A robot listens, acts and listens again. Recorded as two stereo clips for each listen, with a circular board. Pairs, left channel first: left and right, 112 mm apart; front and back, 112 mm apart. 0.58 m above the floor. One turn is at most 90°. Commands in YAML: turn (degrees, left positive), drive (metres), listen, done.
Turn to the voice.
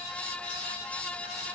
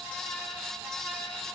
listen: true
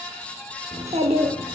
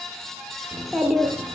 turn: -90
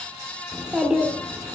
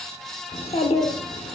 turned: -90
turn: -10
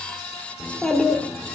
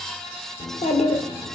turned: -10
done: "Facing the child speaking."